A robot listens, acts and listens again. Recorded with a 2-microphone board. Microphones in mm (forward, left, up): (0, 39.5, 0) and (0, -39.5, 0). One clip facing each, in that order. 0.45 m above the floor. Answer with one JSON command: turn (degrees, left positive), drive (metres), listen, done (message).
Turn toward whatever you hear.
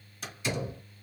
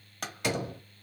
{"turn": -70}
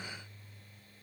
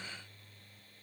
{"listen": true}
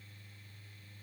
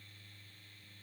{"done": "I heard a door slam, but can't make it out now. It was about straight ahead or 40° right."}